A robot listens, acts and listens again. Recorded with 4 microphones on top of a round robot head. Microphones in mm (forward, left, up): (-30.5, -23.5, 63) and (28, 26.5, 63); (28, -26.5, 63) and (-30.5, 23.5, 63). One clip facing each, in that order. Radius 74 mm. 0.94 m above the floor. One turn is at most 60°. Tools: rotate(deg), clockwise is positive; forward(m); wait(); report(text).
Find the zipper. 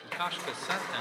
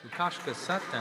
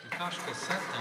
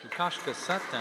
rotate(60)
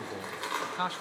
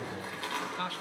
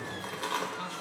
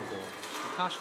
rotate(60)
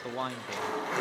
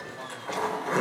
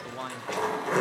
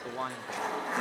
rotate(15)
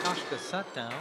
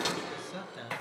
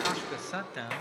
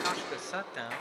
report("Facing the zipper.")